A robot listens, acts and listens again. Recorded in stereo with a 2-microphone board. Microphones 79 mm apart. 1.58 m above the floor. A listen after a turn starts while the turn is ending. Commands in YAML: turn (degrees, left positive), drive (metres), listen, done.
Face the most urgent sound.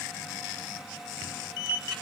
listen: true
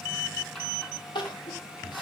turn: 90
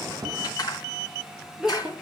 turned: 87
done: "Facing the crying, 2 to 4 m away."